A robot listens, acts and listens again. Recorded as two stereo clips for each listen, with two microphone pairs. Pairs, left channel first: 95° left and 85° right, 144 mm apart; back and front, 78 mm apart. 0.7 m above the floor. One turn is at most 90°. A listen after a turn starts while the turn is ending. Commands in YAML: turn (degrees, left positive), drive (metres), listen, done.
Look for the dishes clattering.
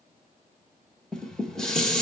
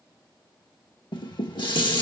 turn: 90
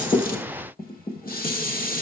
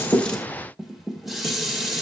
turn: 90
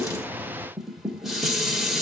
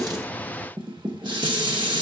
done: "Facing the dishes clattering, 1 to 2 m away."